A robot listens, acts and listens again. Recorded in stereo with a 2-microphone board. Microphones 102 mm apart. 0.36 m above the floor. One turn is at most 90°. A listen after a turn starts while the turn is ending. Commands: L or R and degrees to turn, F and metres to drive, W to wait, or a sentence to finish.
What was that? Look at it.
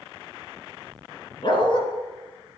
L50
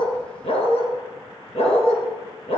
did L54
L65
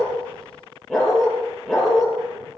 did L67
Facing the dog barking, 2 to 4 m away.